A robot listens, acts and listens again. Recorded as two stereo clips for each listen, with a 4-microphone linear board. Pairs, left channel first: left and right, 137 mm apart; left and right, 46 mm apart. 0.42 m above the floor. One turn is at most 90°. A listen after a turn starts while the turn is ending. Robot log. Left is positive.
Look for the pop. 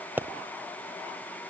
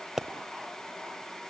cmd yaw -30
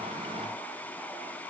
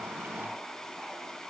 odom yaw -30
cmd idle
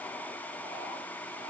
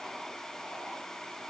end: I heard a pop, but can't make it out now. It was about 15° left or 135° right.